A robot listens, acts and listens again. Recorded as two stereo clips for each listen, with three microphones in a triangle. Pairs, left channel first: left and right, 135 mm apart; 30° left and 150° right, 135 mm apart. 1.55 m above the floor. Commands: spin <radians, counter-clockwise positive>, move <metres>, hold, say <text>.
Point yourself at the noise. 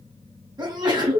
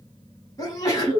spin -0.61
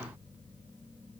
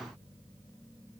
say Facing where the sneeze came from. I can't hear it now.